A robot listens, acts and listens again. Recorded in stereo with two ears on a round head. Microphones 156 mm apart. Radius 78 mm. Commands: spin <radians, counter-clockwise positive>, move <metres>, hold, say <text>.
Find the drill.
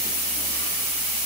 hold
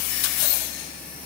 hold
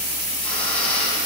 spin 0.52
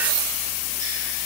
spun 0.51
hold
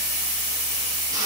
hold
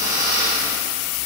spin -0.35
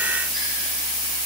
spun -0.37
hold
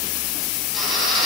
say Found it: a drill, straight ahead.